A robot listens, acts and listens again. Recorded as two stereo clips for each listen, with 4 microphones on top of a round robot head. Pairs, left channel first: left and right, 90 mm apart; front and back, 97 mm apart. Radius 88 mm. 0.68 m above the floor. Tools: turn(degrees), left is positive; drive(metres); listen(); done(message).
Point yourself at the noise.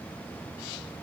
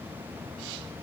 listen()
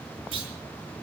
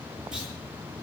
turn(degrees=-95)
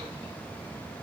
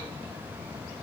done("I heard a clunk from this way, but can't make it out now.")